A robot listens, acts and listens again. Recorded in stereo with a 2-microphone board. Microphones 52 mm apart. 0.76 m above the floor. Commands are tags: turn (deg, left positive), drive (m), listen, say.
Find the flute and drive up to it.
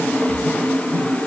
<listen/>
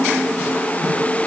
<listen/>
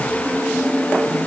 <say>I can't make out a flute.</say>